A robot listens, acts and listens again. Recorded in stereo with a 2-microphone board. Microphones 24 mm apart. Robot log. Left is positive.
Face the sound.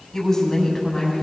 note: The woman speaking: about 20° left or 160° left.
cmd yaw +20
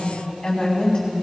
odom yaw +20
note: The woman speaking: about 35° left or 145° left.
cmd yaw +35
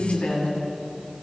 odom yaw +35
note: So it is at 110° left.
cmd yaw +110
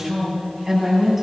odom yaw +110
note: The woman speaking is now 10° right.
cmd yaw -10
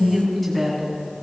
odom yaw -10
end: Facing the woman speaking.